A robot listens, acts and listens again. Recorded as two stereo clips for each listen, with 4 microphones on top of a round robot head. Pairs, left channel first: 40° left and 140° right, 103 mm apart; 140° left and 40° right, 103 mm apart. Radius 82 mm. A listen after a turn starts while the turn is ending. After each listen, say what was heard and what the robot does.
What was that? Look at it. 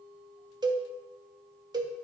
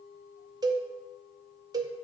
The cowbell: 90° right. Turn 90° right.
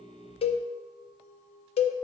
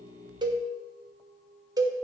The cowbell is now 15° left. Turn 15° left.
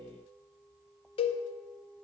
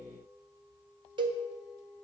Found it: a cowbell, straight ahead, under 1 m away.